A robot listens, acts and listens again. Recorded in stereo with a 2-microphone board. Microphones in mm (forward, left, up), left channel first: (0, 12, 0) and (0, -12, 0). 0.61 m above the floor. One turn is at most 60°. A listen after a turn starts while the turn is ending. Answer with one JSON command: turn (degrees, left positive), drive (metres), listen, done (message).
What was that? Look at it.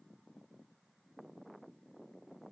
{"listen": true}
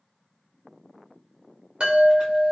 {"turn": -50}
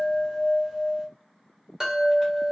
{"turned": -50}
{"turn": -20}
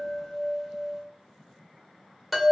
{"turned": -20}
{"done": "Facing the chime, 1 to 2 m away."}